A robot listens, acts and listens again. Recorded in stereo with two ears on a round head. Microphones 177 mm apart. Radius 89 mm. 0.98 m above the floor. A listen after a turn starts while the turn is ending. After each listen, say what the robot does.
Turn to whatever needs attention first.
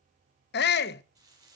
Turn 60° left.
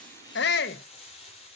Turn 60° left.
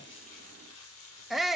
Found it: a shout, straight ahead.